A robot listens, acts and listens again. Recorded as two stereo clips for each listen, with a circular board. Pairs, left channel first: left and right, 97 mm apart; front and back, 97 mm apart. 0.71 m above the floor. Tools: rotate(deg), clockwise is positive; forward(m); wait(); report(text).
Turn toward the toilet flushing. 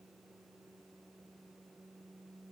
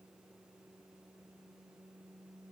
wait()
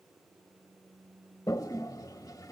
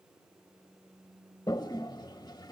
rotate(-40)
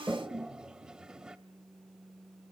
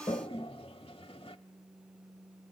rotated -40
rotate(10)
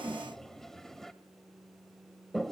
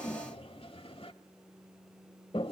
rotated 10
report("Facing the toilet flushing.")